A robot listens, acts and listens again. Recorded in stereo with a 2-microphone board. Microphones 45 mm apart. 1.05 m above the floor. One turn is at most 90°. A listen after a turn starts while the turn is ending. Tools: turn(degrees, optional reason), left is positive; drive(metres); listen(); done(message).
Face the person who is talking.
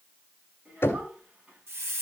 turn(degrees=-20, reason="The child speaking: about 20° right or 160° right.")
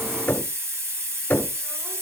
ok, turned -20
listen()
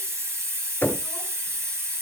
listen()
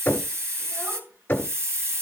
turn(degrees=-90, reason="So it is at 140° right.")
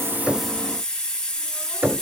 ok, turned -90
turn(degrees=-50, reason="Nothing new. It was at 50° right.")
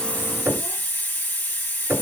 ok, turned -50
listen()
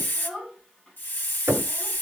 done("Found it: a child speaking, straight ahead.")